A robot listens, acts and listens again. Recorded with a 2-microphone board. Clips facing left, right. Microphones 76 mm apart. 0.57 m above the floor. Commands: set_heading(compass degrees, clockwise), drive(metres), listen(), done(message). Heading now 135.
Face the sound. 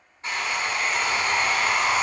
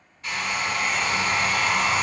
set_heading(105)
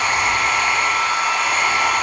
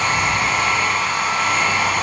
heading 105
done("Found it: a hair dryer, straight ahead.")